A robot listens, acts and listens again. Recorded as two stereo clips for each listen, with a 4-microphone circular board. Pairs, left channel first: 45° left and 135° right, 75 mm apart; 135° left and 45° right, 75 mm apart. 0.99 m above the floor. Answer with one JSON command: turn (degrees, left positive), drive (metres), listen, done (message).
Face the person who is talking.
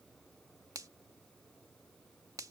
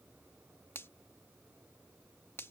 {"listen": true}
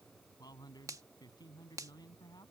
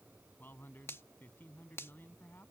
{"turn": 75}
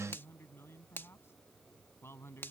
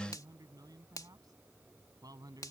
{"turn": -10}
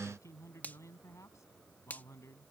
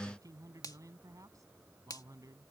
{"done": "Found it: a man speaking, straight ahead."}